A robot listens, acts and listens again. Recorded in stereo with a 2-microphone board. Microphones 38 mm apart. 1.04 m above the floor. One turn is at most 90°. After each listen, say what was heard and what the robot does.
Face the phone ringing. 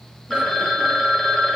Turn 30° left.
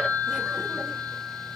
So it is at 140° left. Turn 90° left.
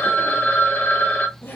The phone ringing is now 50° left. Turn 50° left.
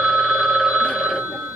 Found it: a phone ringing, straight ahead, under 1 m away.